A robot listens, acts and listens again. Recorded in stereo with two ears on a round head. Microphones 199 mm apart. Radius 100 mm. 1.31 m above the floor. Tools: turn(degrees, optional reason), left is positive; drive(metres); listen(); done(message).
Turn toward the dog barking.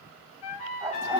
turn(degrees=-30)
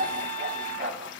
turn(degrees=-145, reason="So it is at 145° right.")
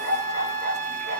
turn(degrees=-60, reason="The dog barking is now 60° right.")
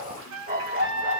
turn(degrees=-40, reason="The dog barking is now 40° right.")
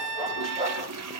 turn(degrees=-25, reason="The dog barking is now 25° right.")
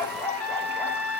turn(degrees=10, reason="The dog barking is now 10° left.")
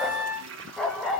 done("Facing the dog barking.")